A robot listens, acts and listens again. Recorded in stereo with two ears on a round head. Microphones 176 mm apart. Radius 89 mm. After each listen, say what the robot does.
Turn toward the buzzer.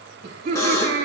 Turn 15° left.
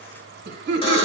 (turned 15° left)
Keep listening.
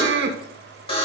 Turn 150° left.
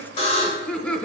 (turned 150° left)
Turn 40° left.
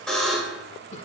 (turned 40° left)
Facing the buzzer.